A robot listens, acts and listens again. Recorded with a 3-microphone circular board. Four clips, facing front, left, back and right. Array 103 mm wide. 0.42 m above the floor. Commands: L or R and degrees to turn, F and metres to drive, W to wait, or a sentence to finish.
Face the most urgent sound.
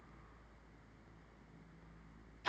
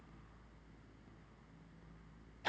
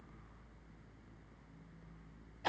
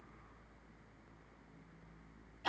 W
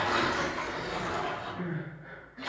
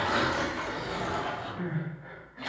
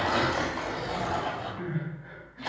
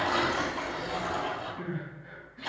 L75
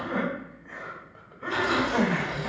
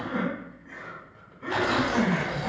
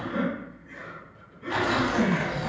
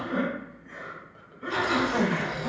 Found it: crying, straight ahead, 1 to 2 m away.